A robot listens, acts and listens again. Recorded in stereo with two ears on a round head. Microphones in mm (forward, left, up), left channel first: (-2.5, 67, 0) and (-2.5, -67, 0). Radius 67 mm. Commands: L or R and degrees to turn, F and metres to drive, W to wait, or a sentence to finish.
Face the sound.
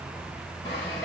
L20
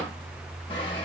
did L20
L135
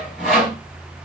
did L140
Facing the sawing.